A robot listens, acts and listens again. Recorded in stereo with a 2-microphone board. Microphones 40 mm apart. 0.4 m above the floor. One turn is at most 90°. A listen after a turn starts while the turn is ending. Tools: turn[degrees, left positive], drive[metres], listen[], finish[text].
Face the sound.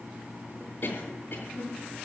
Thought: The cough: about 45° left or 135° left.
Action: turn[45]
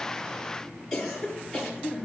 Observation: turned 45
Action: finish[Found it: a cough, straight ahead, over 4 m away.]